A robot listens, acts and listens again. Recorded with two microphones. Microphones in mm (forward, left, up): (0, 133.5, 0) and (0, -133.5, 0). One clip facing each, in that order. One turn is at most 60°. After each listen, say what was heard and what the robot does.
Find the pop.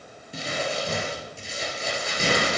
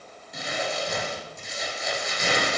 Keep listening.
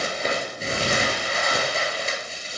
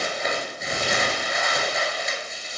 Keep listening.
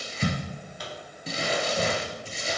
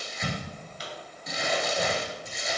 The pop: about 60° left or 120° left. Turn 60° left.
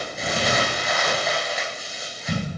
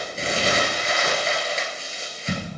Keep listening.
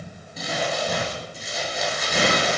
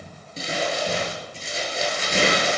I heard a pop, but can't make it out now. It was about straight ahead or 60° left.